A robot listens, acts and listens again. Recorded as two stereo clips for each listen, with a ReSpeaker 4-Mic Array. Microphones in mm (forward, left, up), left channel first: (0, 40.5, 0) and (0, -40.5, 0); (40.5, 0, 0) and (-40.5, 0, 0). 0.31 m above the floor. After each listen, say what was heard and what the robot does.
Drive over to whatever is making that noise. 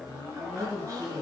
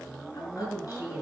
The woman speaking: 45° right. Turn 45° right.
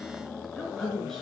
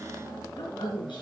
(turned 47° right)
Drive 1.0 m forward.
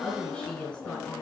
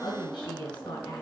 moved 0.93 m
The woman speaking is now 10° left. Turn 10° left.
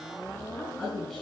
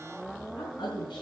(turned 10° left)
Drive 1.0 m forward.
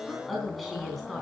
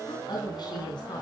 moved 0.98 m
Drive 1.0 m forward.
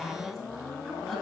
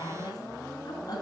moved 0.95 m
Drive 1.0 m forward.
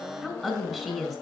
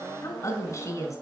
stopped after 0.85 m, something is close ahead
I am next to the woman speaking.